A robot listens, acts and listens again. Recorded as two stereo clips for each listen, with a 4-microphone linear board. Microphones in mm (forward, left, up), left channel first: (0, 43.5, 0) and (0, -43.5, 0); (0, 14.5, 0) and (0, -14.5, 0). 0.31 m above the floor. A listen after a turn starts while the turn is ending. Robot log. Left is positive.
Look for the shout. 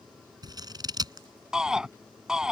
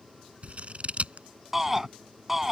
cmd yaw -30
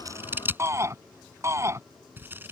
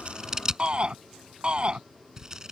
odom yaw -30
note: So it is at 145° right.
cmd yaw -145
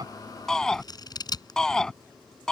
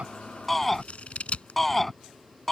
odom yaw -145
end: Found it: a shout, straight ahead.